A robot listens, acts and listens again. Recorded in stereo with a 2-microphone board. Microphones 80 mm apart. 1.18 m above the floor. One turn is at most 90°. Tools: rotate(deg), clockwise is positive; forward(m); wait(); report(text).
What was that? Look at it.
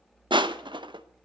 rotate(90)
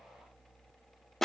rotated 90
report("Facing the crushing.")